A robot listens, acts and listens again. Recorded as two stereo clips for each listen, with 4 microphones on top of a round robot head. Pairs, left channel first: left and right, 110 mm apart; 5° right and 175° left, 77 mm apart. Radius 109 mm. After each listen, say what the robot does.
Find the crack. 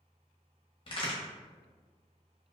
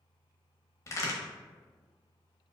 Turn 45° left.
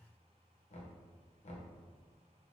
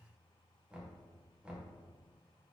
Facing where the crack came from. I can't hear it now.